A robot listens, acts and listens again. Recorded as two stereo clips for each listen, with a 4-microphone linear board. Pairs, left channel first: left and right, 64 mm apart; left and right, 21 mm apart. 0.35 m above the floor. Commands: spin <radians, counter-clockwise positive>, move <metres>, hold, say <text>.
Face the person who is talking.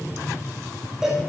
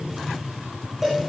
hold
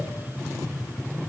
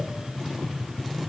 hold
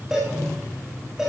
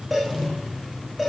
say I can't make out anyone speaking to turn to.